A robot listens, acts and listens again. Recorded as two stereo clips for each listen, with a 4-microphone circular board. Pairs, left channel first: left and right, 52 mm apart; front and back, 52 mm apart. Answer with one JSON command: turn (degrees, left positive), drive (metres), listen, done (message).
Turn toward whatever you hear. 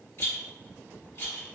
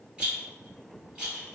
{"turn": 110}
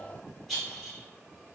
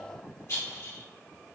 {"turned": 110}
{"done": "Facing the rattle."}